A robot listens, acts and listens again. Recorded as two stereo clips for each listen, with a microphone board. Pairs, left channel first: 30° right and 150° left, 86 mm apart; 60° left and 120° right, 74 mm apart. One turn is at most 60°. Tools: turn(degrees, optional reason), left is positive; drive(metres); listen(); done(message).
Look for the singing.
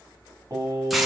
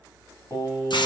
turn(degrees=60, reason="The singing: 100° left.")
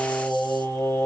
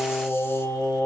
turn(degrees=25, reason="The singing is now 25° left.")
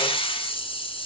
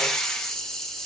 listen()
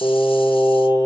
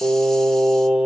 turn(degrees=-45, reason="The singing is now 45° right.")
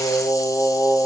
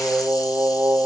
turn(degrees=-40, reason="The singing is now 40° right.")
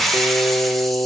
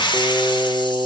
done("Found it: singing, straight ahead, 1 to 2 m away.")